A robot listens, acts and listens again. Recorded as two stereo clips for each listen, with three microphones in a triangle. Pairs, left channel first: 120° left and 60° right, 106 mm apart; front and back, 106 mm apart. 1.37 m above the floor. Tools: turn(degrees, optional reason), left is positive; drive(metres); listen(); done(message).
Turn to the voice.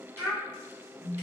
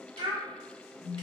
turn(degrees=-135, reason="The child speaking: 135° right.")
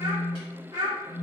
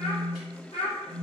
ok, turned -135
turn(degrees=-10, reason="The child speaking is now 10° right.")
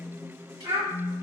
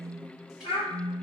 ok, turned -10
done("Found it: a child speaking, straight ahead, under 1 m away.")